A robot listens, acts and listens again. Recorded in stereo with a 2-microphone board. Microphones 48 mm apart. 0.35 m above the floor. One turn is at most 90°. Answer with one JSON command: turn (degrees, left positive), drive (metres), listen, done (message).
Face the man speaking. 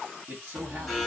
{"turn": -35}
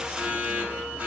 {"listen": true}
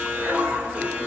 {"listen": true}
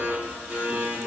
{"turn": -90}
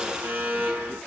{"turn": -15}
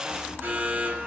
{"listen": true}
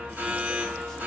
{"done": "Facing where the man speaking came from. I can't hear it now."}